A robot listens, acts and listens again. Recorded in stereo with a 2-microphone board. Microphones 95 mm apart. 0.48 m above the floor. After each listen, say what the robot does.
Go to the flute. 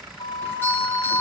Turn 60° left.
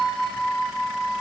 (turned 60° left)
Drive 1.0 m forward.
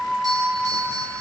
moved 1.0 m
Drive 1.0 m forward.
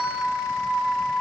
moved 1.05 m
Turn 10° left.
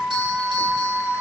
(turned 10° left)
Drive 1.0 m forward.
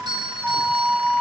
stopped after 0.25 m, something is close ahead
I am next to the flute.